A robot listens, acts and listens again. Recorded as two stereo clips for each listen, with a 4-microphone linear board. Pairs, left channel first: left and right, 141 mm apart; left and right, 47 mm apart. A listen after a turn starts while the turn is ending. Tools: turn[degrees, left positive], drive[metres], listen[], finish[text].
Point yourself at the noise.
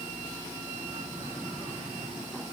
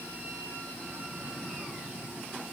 Action: listen[]
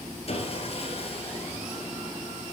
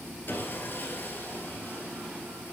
Thought: The sawing: about 45° left or 135° left.
Action: turn[45]
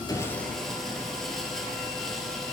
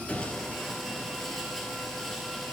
Action: finish[Facing the sawing.]